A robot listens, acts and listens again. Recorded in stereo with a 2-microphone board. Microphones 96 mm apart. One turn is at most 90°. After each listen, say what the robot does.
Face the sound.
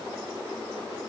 Keep listening.
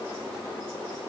Keep listening.
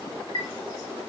Turn 60° left.
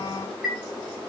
Facing the chime, 1 to 2 m away.